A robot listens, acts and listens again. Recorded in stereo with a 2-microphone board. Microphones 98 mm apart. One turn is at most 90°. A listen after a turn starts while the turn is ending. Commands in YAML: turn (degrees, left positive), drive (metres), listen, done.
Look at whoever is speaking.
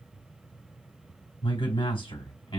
turn: 65
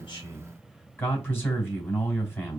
turn: 25
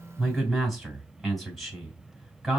done: "Facing the man speaking, 2 to 4 m away."